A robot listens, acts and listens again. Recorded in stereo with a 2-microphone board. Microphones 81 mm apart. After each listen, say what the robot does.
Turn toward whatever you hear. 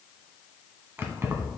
Turn 35° right.
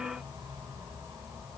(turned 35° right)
Keep listening.
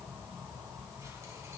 Turn 45° right.
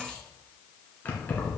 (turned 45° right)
Turn 25° left.
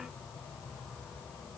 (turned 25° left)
Turn 10° left.
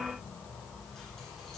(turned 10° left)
Facing the keys jangling.